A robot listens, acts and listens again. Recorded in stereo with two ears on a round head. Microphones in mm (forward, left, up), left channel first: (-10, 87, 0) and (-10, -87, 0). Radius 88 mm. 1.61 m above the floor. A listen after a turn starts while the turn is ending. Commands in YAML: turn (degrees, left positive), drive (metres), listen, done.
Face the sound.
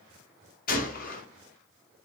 turn: 50
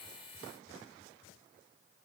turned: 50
listen: true
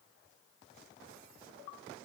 done: "I heard a gunshot, but can't make it out now. It was about straight ahead or 80° left."